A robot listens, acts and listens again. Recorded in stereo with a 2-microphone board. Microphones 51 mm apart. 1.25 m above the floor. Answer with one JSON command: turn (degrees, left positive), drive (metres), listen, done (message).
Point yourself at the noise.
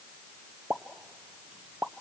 {"turn": -30}
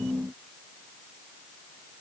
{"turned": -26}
{"listen": true}
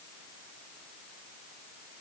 {"done": "I heard a pop, but can't make it out now. It was about 5° right or 125° right."}